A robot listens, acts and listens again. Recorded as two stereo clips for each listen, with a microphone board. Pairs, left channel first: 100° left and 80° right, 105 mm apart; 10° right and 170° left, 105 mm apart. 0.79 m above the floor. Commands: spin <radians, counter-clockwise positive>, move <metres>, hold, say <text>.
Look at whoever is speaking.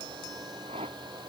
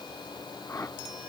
hold
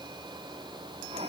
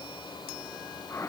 hold
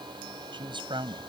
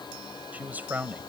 spin -2.01
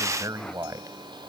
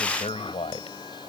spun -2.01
spin -0.35
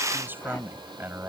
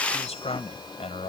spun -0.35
spin -0.17
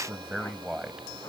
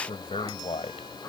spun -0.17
say Found it: a man speaking, straight ahead.